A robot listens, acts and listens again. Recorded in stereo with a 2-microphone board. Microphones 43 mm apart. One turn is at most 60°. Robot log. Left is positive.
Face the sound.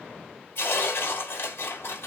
note: The tearing paper: about 70° left or 110° left.
cmd yaw +60
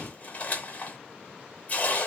note: So it is at 45° left.
cmd yaw +45
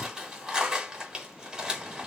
note: The tearing paper is now 15° right.
cmd yaw -15
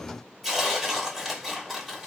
end: Found it: tearing paper, straight ahead, under 1 m away.